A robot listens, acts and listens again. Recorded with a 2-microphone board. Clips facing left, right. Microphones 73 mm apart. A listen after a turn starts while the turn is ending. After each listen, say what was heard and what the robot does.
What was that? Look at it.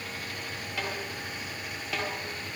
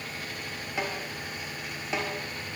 The snare drum: about 20° right or 160° right. Turn 20° right.
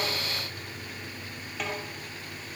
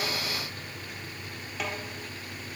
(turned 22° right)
Found it: a snare drum, straight ahead.